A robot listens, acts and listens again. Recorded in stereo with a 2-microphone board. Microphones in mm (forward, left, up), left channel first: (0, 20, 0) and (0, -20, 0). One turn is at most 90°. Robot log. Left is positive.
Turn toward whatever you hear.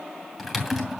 cmd yaw -30
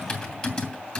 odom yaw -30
note: So it is at 20° left.
cmd yaw +20
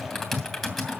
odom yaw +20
end: Facing the typing on a keyboard.